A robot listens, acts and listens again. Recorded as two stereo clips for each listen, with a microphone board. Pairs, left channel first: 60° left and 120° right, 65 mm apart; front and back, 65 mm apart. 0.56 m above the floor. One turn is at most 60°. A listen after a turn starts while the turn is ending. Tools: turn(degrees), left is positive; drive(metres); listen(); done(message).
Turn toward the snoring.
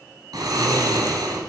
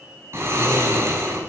turn(degrees=-60)
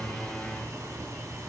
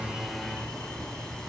turn(degrees=-60)
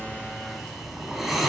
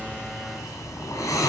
turn(degrees=-30)
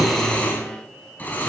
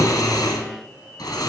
done("Facing the snoring.")